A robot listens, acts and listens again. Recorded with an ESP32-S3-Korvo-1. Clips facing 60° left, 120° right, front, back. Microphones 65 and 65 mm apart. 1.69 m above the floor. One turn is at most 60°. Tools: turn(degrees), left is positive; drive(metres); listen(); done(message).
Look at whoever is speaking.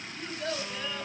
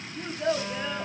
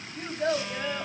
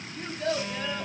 turn(degrees=-55)
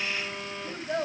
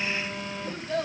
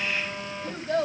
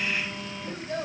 turn(degrees=-10)
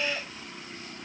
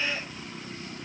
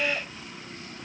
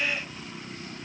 listen()
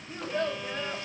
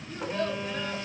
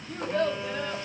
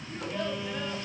done("Facing the child speaking.")